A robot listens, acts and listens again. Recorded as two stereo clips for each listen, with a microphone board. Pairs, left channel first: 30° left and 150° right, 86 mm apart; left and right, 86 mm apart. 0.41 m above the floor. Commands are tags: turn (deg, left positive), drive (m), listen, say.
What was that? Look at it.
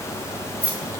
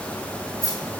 <turn deg="135"/>
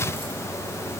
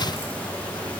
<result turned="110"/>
<turn deg="25"/>
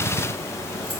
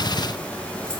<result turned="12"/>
<turn deg="10"/>
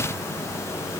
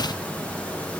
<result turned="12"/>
<say>I heard keys jangling from this way, but can't make it out now.</say>